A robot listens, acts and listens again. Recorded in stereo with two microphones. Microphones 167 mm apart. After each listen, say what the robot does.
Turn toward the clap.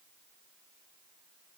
Keep listening.
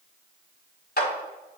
Turn 70° left.
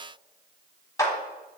Turn 20° left.
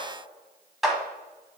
Facing the clap, 1 to 2 m away.